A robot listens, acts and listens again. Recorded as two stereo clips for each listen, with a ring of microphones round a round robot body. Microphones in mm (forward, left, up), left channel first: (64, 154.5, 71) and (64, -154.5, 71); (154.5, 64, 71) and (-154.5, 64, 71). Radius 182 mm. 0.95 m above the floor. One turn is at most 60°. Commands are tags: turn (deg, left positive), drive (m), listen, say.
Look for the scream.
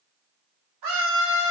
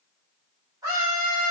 <turn deg="-60"/>
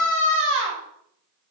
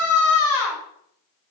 <turn deg="-40"/>
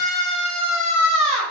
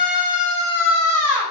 <turn deg="-20"/>
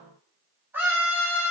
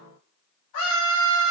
<say>Facing the scream.</say>